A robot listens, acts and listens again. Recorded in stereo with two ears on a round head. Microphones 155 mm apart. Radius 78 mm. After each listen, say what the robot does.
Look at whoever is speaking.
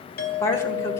Turn 15° left.
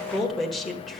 Facing the woman speaking.